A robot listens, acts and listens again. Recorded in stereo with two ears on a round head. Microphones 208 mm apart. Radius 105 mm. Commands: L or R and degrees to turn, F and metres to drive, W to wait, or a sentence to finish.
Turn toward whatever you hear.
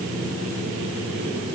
W
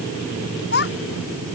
L45
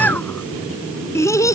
L15
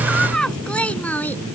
Facing the child speaking.